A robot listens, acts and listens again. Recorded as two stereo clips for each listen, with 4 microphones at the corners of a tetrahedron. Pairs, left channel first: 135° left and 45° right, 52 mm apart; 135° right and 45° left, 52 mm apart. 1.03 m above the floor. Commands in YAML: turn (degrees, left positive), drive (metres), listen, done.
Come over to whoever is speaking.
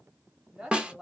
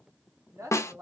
turn: 35
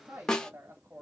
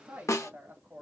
drive: 1.0
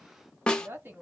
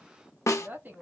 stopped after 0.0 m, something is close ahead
done: "Something is in my way. I am facing the woman speaking but have not reached it."